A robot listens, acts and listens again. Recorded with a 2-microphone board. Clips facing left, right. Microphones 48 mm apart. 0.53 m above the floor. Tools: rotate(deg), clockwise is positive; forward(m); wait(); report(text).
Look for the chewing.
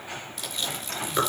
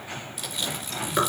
rotate(30)
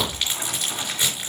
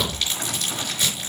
rotate(-30)
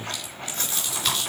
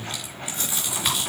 rotate(15)
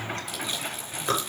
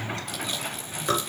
report("Facing the chewing, over 4 m away.")